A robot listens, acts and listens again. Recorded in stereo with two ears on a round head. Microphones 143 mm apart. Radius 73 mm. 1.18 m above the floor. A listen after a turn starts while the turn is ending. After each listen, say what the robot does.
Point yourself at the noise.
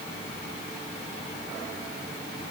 Keep listening.
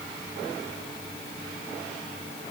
Keep listening.
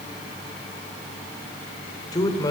Turn 25° left.
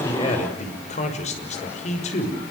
Turn 130° left.
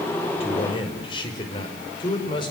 Turn 30° left.
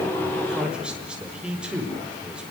Found it: a man speaking, straight ahead, over 4 m away.